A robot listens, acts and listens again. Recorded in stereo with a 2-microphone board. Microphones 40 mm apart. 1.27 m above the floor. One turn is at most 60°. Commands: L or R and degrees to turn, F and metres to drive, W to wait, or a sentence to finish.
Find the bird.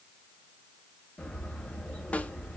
L30
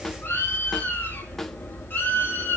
L60
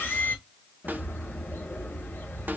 L55
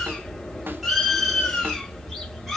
Found it: a bird, straight ahead.